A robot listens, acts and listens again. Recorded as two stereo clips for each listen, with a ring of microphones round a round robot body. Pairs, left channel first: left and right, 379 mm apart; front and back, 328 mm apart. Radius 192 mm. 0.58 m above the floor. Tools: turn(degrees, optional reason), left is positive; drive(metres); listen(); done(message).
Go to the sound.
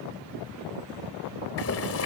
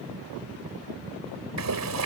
turn(degrees=145, reason="The boiling: 145° left.")
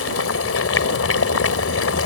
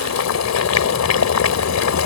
turn(degrees=35, reason="The boiling is now 35° left.")
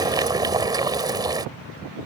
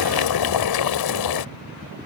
turn(degrees=-10, reason="The boiling is now 10° right.")
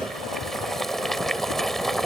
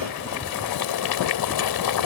drive(metres=1.0)
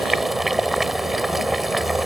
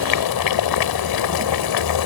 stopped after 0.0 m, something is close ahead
done("Something is in my way. I am facing the boiling but have not reached it.")